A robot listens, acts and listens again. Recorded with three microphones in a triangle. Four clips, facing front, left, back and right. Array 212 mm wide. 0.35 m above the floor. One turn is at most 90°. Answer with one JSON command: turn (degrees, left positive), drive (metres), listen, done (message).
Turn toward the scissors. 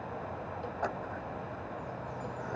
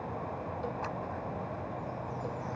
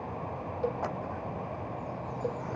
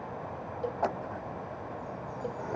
{"turn": -80}
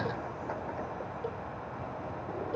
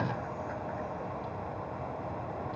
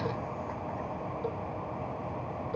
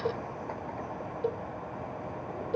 {"listen": true}
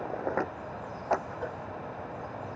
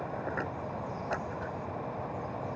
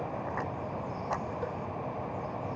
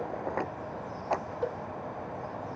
{"turn": -15}
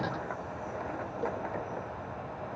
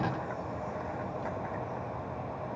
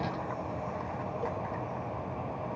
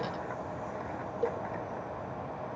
{"listen": true}
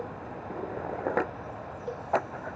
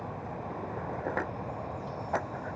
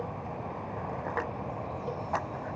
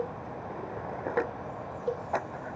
{"done": "Found it: scissors, straight ahead."}